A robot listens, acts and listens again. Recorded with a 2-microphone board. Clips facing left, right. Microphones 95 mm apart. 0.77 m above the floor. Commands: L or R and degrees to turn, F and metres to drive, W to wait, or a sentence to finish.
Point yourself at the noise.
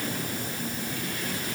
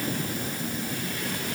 W
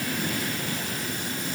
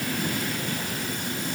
W
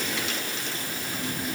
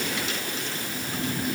I can't make out anything.